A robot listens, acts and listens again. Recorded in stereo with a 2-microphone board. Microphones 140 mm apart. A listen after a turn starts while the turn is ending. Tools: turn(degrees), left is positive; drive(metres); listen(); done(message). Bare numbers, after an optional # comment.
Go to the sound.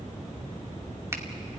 # The finger snap: about 20° right or 160° right.
turn(-20)
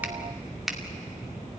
drive(1.0)
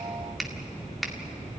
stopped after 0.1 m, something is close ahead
done("Blocked. The finger snap is further on, straight ahead.")